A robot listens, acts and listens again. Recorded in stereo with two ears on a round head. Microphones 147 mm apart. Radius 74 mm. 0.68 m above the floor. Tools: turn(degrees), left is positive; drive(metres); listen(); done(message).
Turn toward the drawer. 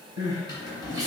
turn(degrees=25)
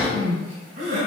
turn(degrees=130)
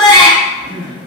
listen()
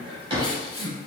turn(degrees=-30)
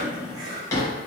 turn(degrees=20)
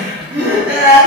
listen()
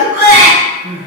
listen()
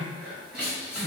done("Facing where the drawer came from. I can't hear it now.")